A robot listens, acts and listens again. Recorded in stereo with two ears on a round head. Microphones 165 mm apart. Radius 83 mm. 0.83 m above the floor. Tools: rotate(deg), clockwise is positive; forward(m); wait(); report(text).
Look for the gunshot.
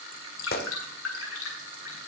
rotate(-55)
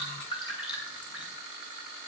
wait()
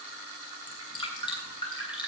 report("I heard a gunshot, but can't make it out now. It was about straight ahead or 70° left.")